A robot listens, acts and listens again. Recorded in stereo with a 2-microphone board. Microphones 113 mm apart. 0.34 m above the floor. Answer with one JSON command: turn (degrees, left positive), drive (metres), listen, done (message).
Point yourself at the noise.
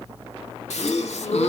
{"turn": 75}
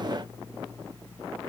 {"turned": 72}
{"listen": true}
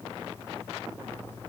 {"done": "I heard a gasp, but can't make it out now. It was about straight ahead or 35° left."}